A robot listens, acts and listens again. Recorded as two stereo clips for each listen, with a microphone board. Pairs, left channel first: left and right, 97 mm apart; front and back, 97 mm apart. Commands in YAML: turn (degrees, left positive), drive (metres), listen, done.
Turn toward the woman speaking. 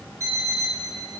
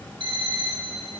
listen: true
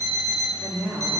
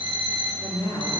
done: "Found it: a woman speaking, straight ahead, 2 to 4 m away."